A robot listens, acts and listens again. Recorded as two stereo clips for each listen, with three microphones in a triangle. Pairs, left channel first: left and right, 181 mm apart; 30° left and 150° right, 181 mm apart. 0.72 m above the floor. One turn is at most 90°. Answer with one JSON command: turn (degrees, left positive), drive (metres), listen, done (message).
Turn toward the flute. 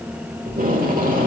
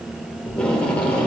{"listen": true}
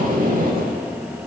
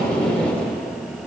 {"listen": true}
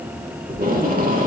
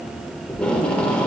{"done": "I can't make out a flute, only tape being pulled."}